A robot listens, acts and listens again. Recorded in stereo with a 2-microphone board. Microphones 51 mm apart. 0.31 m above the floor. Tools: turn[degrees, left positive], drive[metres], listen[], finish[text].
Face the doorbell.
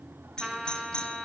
Thought: The doorbell: about 20° left or 160° left.
Action: turn[20]
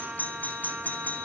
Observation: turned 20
Thought: So it is at 140° left.
Action: turn[140]
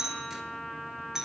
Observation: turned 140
Thought: The doorbell is now 10° right.
Action: turn[-10]
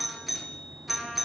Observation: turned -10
Action: finish[Found it: a doorbell, straight ahead, over 4 m away.]